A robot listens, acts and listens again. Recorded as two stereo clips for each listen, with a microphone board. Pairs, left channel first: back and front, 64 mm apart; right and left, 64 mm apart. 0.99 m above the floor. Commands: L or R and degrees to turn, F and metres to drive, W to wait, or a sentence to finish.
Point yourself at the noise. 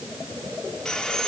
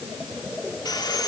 R100
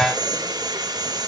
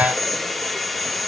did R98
Found it: sawing, straight ahead, 1 to 2 m away.